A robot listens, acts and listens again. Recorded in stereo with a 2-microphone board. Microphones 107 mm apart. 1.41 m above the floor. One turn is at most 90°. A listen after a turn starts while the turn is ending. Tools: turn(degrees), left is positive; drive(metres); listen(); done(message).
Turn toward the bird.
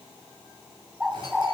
turn(degrees=-30)
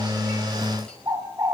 turn(degrees=-90)
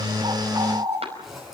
turn(degrees=-50)
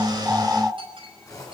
turn(degrees=-10)
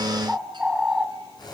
done("Facing the bird, 2 to 4 m away.")